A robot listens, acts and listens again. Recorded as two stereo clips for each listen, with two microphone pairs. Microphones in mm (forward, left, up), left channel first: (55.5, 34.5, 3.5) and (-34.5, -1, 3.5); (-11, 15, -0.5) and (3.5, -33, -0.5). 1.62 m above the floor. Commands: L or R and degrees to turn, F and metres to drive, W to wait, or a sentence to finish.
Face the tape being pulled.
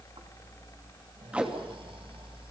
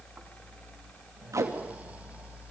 R80
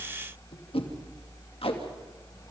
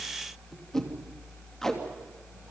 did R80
L25
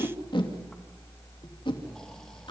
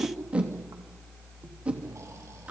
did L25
R10
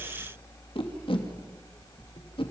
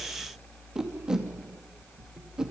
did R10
Found it: tape being pulled, straight ahead.